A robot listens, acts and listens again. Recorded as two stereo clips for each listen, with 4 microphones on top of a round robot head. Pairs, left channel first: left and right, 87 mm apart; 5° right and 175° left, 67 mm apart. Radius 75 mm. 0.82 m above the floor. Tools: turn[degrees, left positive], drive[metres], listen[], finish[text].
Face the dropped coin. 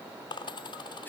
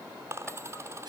Thought: The dropped coin: 125° left.
Action: turn[125]
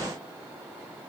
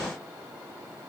Action: finish[Facing where the dropped coin came from. I can't hear it now.]